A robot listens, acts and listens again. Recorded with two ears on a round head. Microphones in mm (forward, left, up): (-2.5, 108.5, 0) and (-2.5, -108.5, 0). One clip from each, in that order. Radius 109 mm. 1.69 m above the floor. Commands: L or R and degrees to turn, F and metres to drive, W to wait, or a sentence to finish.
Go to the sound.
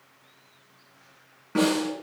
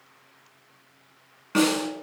R75
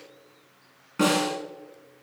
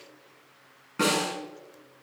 F1.0
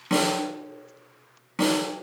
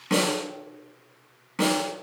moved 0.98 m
F1.0
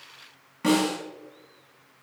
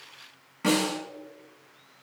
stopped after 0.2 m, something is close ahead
Blocked. The snare drum is further on, straight ahead.